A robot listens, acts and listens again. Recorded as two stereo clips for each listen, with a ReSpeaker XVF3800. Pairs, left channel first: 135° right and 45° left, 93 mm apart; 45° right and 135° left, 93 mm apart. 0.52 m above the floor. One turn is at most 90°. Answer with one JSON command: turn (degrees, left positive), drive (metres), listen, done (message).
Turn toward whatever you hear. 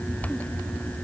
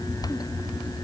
{"listen": true}
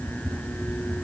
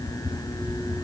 {"listen": true}
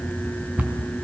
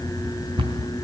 {"turn": 90}
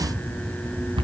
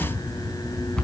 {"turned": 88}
{"turn": 35}
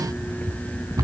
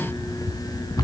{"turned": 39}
{"done": "Found it: a cupboard door, straight ahead, over 4 m away."}